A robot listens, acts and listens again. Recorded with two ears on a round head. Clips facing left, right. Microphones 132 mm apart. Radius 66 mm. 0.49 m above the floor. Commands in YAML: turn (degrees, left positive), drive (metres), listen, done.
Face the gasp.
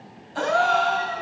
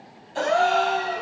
turn: -25
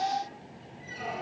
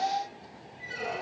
listen: true
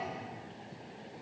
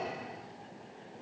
done: "I heard a gasp, but can't make it out now. It was about straight ahead or 130° right."